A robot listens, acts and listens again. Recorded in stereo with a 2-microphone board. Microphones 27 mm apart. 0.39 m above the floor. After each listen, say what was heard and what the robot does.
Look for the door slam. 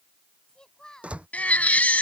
The door slam: about 50° right or 130° right. Turn 50° right.
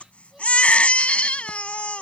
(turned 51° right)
Keep listening.
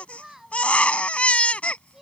I heard a door slam, but can't make it out now. It was about straight ahead or 80° right.